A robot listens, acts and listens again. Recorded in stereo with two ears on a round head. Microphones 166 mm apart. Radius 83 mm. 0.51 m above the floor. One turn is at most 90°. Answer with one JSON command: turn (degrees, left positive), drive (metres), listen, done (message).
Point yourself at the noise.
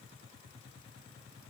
{"listen": true}
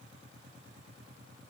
{"listen": true}
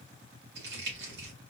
{"turn": -65}
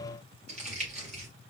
{"turn": -40}
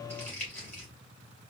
{"turn": 10}
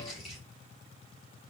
{"done": "Found it: crumpling, straight ahead, 2 to 4 m away."}